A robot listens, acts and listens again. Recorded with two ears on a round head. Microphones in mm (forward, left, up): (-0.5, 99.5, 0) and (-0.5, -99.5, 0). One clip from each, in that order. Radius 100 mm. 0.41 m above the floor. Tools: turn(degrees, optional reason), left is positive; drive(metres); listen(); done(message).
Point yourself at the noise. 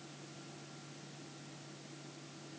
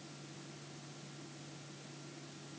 listen()
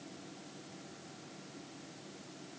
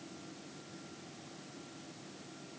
listen()
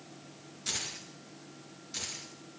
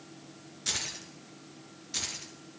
turn(degrees=-20, reason="The keys jangling: about 20° right or 160° right.")
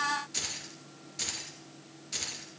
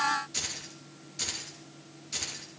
done("Found it: keys jangling, straight ahead, over 4 m away.")